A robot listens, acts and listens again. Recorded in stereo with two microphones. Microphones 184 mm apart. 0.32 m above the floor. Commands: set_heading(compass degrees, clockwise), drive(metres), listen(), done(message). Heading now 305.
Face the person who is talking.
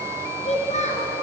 set_heading(265)
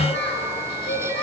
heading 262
set_heading(162)
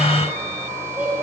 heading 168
set_heading(178)
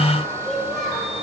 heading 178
done("Facing the child speaking, over 4 m away.")